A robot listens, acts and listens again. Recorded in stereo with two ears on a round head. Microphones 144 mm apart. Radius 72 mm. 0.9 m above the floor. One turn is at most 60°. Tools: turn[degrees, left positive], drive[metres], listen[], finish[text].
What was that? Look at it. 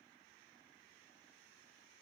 Action: listen[]
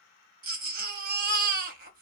Thought: The baby crying: about 60° right or 120° right.
Action: turn[-60]
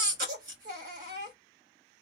Thought: So it is at 60° right.
Action: turn[-60]
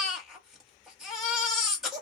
Action: finish[Facing the baby crying.]